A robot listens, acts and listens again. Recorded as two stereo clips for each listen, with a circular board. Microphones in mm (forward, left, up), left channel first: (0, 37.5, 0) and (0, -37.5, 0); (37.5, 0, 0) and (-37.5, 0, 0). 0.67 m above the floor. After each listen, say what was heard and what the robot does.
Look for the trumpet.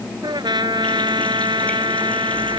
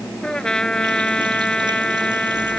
The trumpet: 80° right. Turn 80° right.
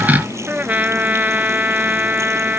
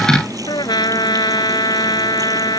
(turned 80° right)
The trumpet is now 20° right. Turn 20° right.
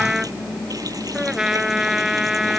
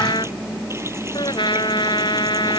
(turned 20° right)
Facing the trumpet.